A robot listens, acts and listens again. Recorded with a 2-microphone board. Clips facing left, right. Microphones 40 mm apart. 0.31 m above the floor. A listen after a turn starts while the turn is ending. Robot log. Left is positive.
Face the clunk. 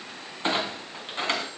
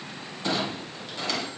note: The clunk: about 40° left or 140° left.
cmd yaw +40
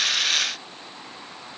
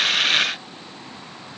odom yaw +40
cmd idle
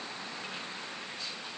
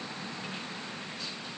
end: I heard a clunk, but can't make it out now. It was about straight ahead or 100° left.